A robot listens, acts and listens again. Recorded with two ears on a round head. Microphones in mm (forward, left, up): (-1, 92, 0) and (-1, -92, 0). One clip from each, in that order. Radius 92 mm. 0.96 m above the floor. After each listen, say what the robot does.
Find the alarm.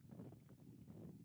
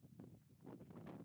Keep listening.
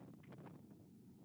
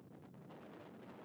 Keep listening.
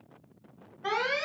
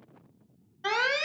Turn 90° right.
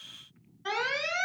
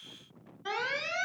Turn 10° left.
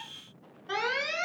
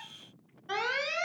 Facing the alarm.